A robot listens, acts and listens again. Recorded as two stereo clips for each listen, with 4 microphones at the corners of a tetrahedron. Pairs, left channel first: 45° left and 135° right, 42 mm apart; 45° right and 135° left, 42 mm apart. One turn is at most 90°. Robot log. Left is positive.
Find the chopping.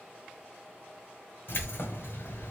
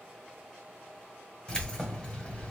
cmd idle
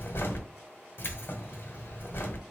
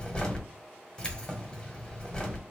cmd idle
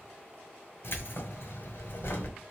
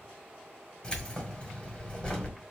end: I can't make out chopping, only keys jangling.